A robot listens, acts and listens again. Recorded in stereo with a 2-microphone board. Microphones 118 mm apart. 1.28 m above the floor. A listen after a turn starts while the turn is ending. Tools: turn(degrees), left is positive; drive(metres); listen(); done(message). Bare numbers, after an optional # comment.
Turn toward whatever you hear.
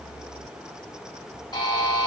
# The buzzer: about 35° left or 145° left.
turn(35)
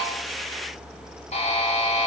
# So it is at 110° left.
turn(110)
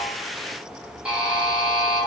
# The buzzer is now 10° right.
turn(-10)
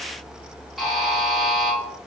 done("Found it: a buzzer, straight ahead, under 1 m away.")